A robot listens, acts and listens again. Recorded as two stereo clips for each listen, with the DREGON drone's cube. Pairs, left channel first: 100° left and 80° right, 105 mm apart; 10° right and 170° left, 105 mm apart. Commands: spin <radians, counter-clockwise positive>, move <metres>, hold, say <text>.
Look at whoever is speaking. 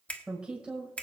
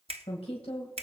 say Facing the woman speaking, 2 to 4 m away.